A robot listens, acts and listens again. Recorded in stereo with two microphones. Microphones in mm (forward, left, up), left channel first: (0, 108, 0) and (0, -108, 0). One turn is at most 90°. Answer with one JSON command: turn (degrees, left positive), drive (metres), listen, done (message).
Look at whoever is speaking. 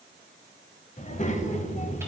{"turn": 30}
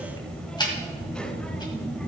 {"done": "Found it: a child speaking, straight ahead, 1 to 2 m away."}